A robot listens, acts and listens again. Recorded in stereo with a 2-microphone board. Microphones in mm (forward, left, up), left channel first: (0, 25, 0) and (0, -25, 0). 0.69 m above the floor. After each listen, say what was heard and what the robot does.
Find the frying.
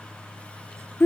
Keep listening.
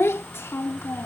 Keep listening.
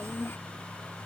I can't make out frying to turn to.